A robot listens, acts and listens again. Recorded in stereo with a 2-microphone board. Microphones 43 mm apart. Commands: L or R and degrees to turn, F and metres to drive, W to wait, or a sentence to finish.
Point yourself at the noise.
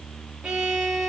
R30
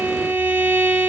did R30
R140
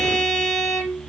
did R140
Found it: a violin, straight ahead, over 4 m away.